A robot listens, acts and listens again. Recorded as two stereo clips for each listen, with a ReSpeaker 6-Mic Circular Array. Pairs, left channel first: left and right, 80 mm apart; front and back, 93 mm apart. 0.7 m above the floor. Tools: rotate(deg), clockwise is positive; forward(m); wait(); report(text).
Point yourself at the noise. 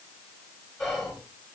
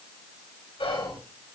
report("Found it: whispering, straight ahead, 2 to 4 m away.")